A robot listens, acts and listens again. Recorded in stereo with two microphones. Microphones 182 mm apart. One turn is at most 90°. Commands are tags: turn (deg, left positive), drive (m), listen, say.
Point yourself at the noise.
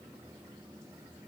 <listen/>
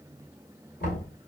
<turn deg="60"/>
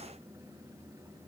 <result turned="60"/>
<listen/>
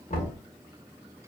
<turn deg="50"/>
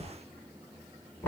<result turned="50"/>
<turn deg="10"/>
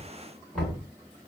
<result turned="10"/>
<say>Facing the knocking, 1 to 2 m away.</say>